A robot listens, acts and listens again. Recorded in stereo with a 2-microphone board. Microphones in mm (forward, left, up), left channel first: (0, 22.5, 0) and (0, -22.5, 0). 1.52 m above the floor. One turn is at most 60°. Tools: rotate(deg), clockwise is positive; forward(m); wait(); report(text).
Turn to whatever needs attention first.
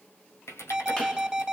rotate(30)
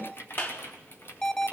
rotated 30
rotate(-15)
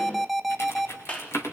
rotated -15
report("Facing the alarm, 2 to 4 m away.")